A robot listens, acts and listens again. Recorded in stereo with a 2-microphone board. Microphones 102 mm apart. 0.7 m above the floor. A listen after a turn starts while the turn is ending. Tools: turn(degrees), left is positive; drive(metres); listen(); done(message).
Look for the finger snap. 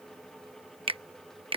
turn(degrees=-60)
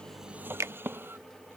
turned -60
turn(degrees=-35)
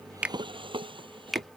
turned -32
done("Found it: a finger snap, straight ahead.")